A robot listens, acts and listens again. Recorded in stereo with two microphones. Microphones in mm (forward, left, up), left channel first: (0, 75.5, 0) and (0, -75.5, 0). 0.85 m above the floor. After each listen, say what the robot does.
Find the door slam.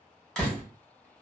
Turn 30° left.
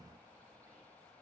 Keep listening.
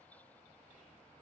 I heard a door slam, but can't make it out now. It was about 25° right or 145° left.